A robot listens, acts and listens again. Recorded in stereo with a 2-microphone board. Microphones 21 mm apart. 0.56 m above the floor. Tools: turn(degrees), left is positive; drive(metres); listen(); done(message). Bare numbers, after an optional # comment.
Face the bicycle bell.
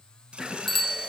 turn(30)
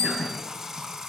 # So it is at 145° left.
turn(145)
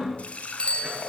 # The bicycle bell is now 50° left.
turn(50)
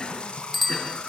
done("Found it: a bicycle bell, straight ahead.")